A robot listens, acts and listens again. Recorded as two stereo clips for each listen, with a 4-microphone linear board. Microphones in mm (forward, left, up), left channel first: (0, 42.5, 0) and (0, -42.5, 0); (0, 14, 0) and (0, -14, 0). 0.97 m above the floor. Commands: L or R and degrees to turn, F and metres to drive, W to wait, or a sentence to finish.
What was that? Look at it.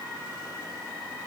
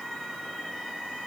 W
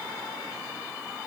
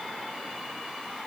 W
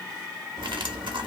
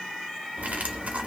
R70
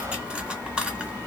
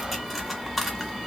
R10
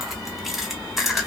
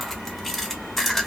Facing the cutlery clinking.